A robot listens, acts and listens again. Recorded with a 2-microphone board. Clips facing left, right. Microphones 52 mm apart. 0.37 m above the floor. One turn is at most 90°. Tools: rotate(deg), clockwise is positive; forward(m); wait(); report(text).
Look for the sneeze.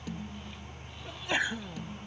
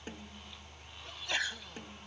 rotate(-20)
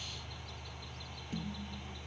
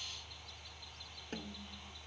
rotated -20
wait()
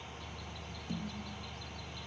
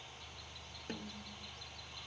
report("I heard a sneeze, but can't make it out now. It was about straight ahead or 140° left.")